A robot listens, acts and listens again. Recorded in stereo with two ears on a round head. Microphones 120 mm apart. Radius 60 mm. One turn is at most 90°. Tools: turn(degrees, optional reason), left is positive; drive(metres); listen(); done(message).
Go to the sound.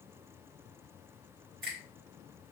turn(degrees=-90)
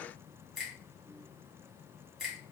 drive(metres=1.0)
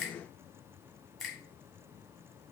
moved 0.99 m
drive(metres=1.0)
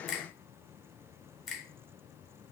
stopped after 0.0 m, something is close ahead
done("I am next to the finger snap.")